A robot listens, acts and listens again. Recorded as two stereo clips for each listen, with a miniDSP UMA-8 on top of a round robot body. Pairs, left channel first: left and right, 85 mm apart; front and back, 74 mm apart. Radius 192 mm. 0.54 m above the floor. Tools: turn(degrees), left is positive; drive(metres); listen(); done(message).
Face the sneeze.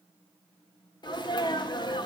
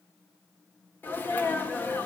turn(degrees=60)
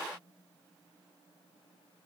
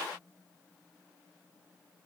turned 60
done("I heard a sneeze from this way, but can't make it out now.")